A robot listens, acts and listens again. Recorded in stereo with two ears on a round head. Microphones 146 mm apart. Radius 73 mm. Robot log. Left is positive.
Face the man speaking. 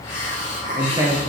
note: The man speaking: about 15° right or 165° right.
cmd yaw -15
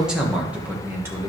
note: The man speaking: about 15° right or 165° right.
cmd yaw -15
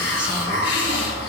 cmd idle
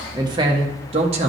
note: The man speaking: about 40° right or 140° right.
cmd yaw -40
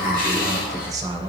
note: The man speaking: about 25° right or 155° right.
cmd yaw -25
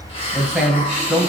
end: Facing the man speaking.